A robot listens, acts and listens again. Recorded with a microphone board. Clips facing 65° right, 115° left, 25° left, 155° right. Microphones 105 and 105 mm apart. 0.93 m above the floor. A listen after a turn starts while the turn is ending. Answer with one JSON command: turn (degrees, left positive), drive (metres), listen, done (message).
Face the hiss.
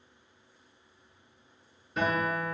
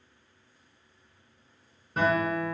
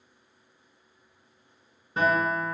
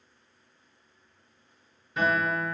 {"listen": true}
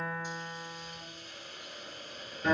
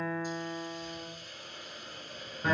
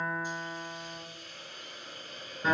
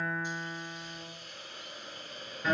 {"turn": 140}
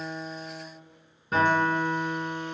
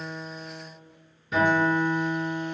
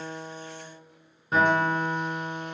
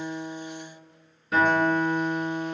{"listen": true}
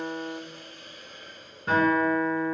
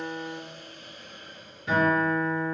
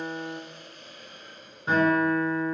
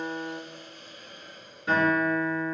{"turn": 35}
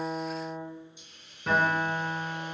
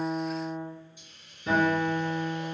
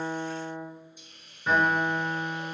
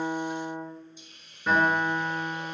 {"done": "Found it: a hiss, straight ahead, 1 to 2 m away."}